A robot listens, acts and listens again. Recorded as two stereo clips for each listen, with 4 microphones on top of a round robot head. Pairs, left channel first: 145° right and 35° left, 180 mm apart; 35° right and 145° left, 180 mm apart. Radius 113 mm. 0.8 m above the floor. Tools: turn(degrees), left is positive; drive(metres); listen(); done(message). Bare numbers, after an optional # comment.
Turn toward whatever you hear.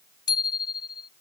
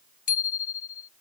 # The bicycle bell: 80° right.
turn(-80)
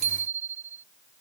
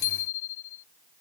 # The bicycle bell is now 20° right.
turn(-20)
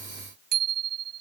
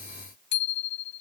done("Found it: a bicycle bell, straight ahead.")